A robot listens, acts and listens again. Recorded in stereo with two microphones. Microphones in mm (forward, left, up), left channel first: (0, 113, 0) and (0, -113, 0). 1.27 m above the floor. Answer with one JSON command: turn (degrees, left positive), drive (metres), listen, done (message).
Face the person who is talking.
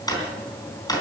{"listen": true}
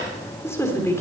{"turn": 30}
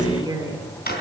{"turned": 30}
{"turn": -20}
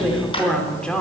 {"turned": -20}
{"done": "Found it: a woman speaking, straight ahead, 2 to 4 m away."}